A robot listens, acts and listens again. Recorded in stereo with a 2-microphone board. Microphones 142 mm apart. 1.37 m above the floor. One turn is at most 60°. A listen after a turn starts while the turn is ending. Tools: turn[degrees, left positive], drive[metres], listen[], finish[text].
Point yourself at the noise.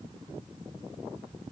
Action: listen[]
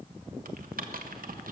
Action: turn[-60]
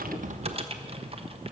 Thought: So it is at 40° right.
Action: turn[-40]
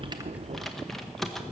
Action: finish[Found it: typing on a keyboard, straight ahead.]